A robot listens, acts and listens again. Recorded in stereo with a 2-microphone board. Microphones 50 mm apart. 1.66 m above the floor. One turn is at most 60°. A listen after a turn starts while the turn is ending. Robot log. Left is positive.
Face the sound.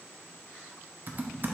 note: The typing on a keyboard: about 40° right or 140° right.
cmd yaw -40
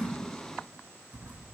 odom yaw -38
note: So it is at 100° right.
cmd yaw -60
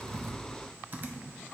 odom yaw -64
note: The typing on a keyboard is now 40° right.
cmd yaw -40
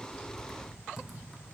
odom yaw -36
end: Found it: typing on a keyboard, straight ahead, under 1 m away.